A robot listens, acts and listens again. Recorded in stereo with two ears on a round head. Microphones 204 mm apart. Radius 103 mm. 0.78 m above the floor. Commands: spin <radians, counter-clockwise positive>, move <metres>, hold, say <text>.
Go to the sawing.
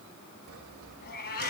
spin -1.22
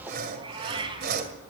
spin -0.70
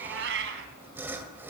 spin -0.17
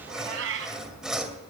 move 1.0
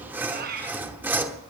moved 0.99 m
spin -0.17
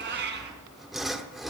move 1.0
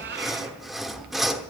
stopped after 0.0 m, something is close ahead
say Arrived at the sawing, straight ahead.